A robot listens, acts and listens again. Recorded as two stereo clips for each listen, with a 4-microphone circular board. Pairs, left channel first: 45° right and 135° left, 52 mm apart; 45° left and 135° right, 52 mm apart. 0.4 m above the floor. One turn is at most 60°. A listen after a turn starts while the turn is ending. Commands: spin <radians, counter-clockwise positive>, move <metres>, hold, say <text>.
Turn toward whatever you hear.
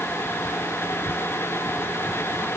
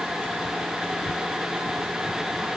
hold
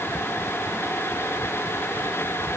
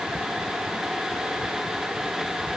hold
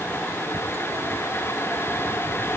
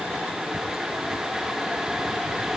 say I can't make out anything to turn to.